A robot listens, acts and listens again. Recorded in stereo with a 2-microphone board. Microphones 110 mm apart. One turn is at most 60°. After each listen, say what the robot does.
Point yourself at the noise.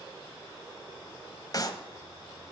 Turn 40° left.
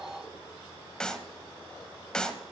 Turn 10° left.
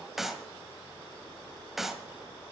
Found it: a clap, straight ahead.